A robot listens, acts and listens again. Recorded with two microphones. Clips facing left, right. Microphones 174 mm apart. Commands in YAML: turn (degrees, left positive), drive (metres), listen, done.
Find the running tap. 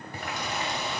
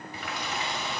turn: 45
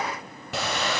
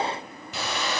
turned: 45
turn: 85
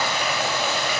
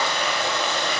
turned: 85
turn: 10
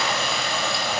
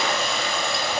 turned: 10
done: "Facing the running tap."